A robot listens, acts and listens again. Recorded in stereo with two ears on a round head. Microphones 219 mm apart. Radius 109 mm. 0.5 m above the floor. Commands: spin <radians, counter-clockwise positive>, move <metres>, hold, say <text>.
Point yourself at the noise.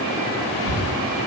spin -1.22
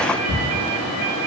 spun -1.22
spin -0.61
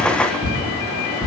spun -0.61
say Facing the ticking, 1 to 2 m away.